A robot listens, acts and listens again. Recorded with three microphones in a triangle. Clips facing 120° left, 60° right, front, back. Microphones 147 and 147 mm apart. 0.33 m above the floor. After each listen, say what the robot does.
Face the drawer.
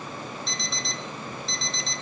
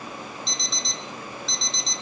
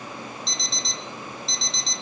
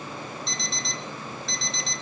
Keep listening.
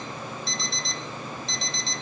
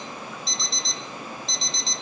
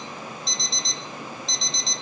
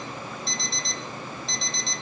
Keep listening.
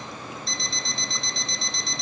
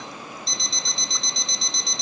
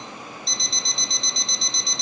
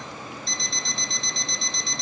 I can't make out a drawer, only an alarm clock.